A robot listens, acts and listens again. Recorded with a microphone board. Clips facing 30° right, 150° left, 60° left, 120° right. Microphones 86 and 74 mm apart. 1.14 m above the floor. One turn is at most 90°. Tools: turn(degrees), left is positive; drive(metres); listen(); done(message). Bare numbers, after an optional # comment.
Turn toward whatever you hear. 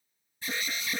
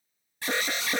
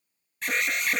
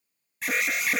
# The alarm: 150° left.
turn(90)
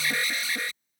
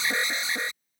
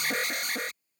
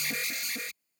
# The alarm is now 85° left.
turn(85)
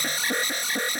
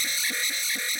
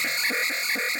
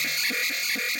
done("Found it: an alarm, straight ahead.")